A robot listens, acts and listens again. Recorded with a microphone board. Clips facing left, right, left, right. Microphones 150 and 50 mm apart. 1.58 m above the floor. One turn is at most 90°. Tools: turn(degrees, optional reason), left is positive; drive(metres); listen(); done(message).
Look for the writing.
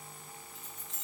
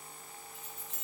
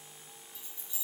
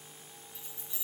listen()
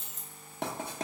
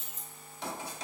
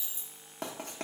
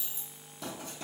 turn(degrees=55, reason="The writing: about 55° left or 125° left.")
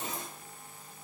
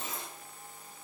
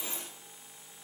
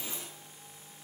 listen()
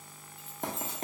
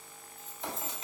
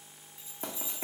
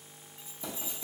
turn(degrees=55, reason="So it is at 55° left.")
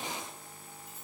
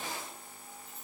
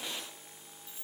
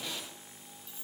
listen()
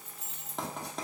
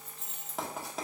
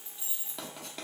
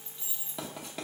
done("Found it: writing, straight ahead.")